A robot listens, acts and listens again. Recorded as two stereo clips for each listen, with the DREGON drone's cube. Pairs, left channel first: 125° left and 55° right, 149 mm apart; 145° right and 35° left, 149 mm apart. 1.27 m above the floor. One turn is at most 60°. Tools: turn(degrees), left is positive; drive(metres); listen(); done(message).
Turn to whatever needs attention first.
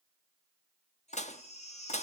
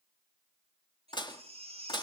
turn(degrees=60)
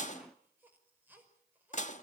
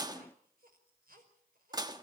turn(degrees=20)
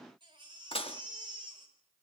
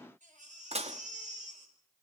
done("Facing the baby crying.")